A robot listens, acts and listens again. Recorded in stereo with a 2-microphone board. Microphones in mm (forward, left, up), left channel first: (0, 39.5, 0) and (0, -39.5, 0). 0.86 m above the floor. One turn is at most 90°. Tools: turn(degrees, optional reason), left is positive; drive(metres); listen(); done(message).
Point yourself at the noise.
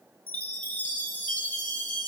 turn(degrees=20, reason="The chime: about 20° left or 160° left.")
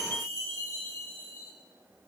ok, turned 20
turn(degrees=90, reason="So it is at 140° left.")
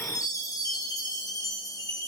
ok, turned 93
turn(degrees=50, reason="The chime is now 50° left.")
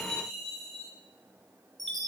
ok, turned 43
done("Found it: a chime, straight ahead.")